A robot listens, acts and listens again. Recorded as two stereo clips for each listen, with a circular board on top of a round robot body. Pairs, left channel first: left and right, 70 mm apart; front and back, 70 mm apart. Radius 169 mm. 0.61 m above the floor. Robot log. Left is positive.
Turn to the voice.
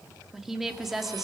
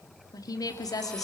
end: Facing the woman speaking.